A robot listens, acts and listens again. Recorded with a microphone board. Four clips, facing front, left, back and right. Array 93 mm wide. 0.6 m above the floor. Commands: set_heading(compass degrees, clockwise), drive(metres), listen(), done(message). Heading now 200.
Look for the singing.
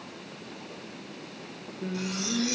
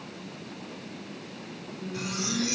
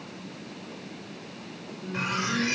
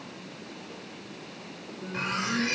set_heading(210)
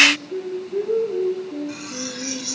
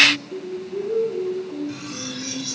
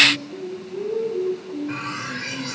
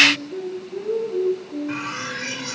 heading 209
done("Found it: singing, straight ahead.")